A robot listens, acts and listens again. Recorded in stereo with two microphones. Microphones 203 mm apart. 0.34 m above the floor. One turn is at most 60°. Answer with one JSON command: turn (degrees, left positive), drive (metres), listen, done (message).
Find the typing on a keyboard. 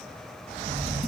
{"turn": -50}
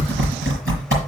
{"turn": -60}
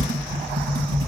{"turn": -25}
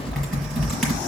{"done": "Found it: typing on a keyboard, straight ahead, over 4 m away."}